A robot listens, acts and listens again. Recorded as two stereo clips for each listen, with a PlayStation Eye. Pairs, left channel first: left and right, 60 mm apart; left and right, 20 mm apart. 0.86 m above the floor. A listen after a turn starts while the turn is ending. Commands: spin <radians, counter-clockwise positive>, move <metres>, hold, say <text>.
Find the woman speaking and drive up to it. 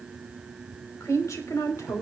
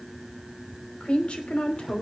spin 1.05
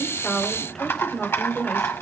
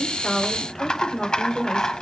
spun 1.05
move 1.0
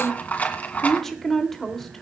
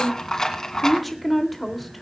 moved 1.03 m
move 1.0
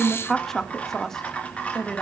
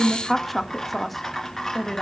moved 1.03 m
spin 0.17
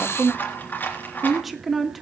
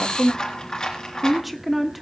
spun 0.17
move 1.0
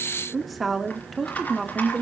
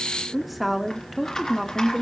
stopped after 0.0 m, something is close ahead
say Arrived at the woman speaking, straight ahead.